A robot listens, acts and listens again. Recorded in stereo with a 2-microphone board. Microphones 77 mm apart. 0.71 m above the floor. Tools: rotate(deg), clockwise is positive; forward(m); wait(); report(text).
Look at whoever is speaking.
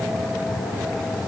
wait()
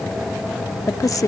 rotate(-50)
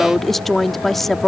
report("Found it: a woman speaking, straight ahead.")